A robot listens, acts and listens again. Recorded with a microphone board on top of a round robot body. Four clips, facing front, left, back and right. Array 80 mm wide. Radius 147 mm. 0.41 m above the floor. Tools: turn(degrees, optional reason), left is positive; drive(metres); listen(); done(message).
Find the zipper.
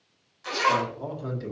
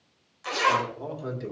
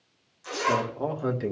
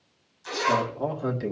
turn(degrees=65, reason="The zipper: 65° left.")
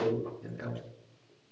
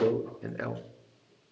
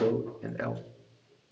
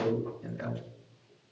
listen()
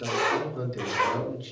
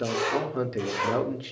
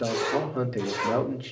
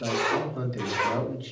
done("Found it: a zipper, straight ahead.")